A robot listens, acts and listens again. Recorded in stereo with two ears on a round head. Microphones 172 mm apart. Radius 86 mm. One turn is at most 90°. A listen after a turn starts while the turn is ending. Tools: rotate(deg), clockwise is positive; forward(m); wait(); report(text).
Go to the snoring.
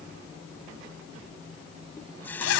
wait()
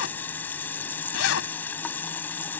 wait()
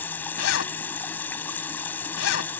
report("I can't make out snoring, only a running tap and a zipper.")